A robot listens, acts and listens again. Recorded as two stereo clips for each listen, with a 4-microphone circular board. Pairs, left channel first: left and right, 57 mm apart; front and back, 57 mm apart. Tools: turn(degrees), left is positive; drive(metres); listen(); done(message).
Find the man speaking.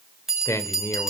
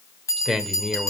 turn(degrees=90)
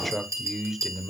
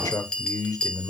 turn(degrees=-10)
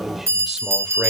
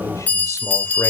listen()
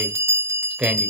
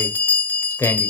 turn(degrees=-20)
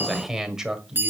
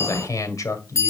turn(degrees=-10)
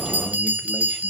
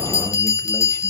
listen()
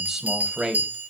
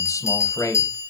done("Found it: a man speaking, straight ahead, 2 to 4 m away.")